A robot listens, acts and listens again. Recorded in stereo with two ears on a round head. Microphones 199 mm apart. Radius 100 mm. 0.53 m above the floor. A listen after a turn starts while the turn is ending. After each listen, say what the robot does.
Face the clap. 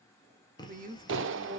Turn 60° right.
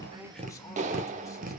Turn 40° right.
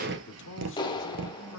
Turn 25° left.
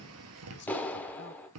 Turn 10° left.
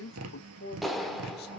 Facing the clap, under 1 m away.